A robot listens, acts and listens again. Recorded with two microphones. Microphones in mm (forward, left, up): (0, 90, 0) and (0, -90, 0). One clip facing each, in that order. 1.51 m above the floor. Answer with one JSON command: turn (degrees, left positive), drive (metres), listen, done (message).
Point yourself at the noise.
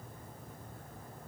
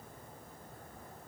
{"listen": true}
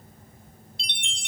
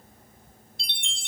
{"turn": 20}
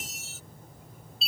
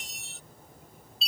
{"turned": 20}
{"done": "Facing the chime."}